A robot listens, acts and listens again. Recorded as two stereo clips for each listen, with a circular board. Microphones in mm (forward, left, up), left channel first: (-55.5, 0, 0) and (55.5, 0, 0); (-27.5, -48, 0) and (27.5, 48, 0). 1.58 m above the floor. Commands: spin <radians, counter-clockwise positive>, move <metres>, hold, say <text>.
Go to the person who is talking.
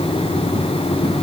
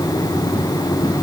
hold
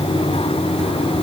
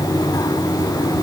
hold
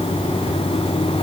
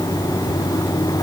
say I can't make out anyone speaking.